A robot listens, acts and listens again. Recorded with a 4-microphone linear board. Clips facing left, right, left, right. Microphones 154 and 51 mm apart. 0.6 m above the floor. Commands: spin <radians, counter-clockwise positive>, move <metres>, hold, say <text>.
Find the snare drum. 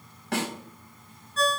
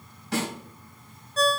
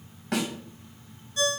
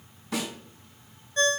spin 1.05
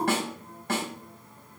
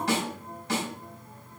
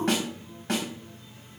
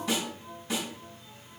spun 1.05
spin 0.96
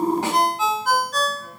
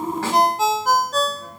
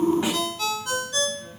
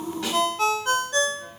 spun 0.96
hold
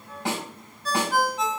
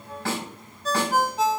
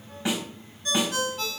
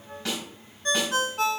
spin 0.26
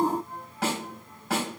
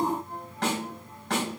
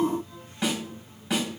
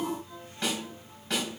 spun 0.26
say Facing the snare drum, over 4 m away.